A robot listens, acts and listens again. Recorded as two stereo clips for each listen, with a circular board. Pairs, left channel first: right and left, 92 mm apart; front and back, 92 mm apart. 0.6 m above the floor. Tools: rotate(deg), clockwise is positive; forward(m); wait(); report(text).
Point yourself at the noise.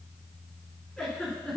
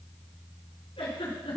report("Facing the giggle.")